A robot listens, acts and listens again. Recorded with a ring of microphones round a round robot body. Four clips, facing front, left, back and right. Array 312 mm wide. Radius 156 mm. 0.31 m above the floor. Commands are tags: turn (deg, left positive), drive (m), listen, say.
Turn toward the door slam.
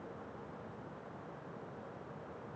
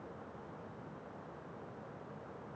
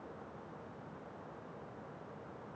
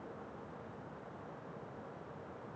<listen/>
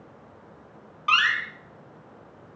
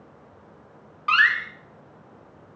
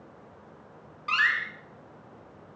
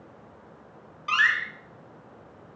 <turn deg="50"/>
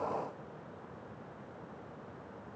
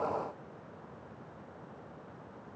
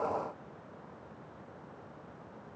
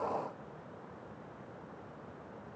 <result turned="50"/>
<say>Facing where the door slam came from. I can't hear it now.</say>